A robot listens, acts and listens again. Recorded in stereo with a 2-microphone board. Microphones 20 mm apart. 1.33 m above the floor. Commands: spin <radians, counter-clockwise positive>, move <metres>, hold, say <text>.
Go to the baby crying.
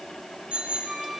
hold
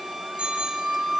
hold
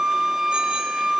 say I can't make out a baby crying to turn to.